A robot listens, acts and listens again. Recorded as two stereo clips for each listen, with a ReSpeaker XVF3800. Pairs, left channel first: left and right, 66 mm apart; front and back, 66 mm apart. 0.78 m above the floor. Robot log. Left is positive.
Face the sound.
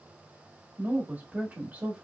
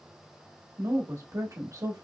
note: The woman speaking: 160° right.
cmd yaw -160
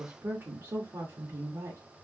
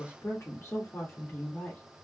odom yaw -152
note: The woman speaking is now 60° right.
cmd yaw -60
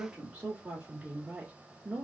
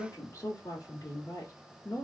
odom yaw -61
note: The woman speaking is now 20° right.
cmd yaw -20
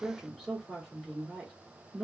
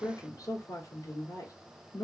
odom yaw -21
end: Found it: a woman speaking, straight ahead.